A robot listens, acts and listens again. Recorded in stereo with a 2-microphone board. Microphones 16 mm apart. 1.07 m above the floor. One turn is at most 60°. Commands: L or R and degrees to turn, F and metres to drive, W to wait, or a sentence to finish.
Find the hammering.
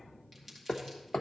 L60
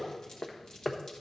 L20
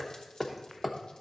Found it: hammering, straight ahead, under 1 m away.